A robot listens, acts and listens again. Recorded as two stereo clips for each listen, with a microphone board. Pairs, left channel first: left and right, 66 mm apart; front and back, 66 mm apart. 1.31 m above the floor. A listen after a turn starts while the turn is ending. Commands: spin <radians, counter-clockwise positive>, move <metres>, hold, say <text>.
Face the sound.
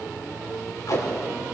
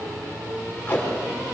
spin 1.13
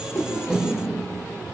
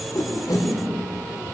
say Facing the tape being pulled.